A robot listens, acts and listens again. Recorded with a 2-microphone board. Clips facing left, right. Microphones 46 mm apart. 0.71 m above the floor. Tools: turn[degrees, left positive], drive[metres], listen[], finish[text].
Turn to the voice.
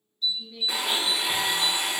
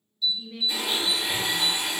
Thought: The woman speaking: about 50° right or 130° right.
Action: turn[-50]
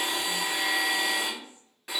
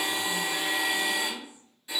Thought: So it is at 20° right.
Action: turn[-20]
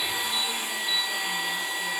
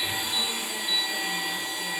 Action: listen[]
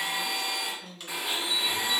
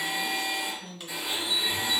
Action: finish[Facing the woman speaking.]